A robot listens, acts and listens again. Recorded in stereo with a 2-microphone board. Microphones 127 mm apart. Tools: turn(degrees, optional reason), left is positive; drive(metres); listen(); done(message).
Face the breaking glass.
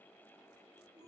listen()
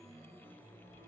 listen()
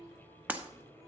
turn(degrees=-30)
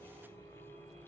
listen()
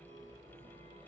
done("I heard breaking glass, but can't make it out now. It was about 15° left or 135° right.")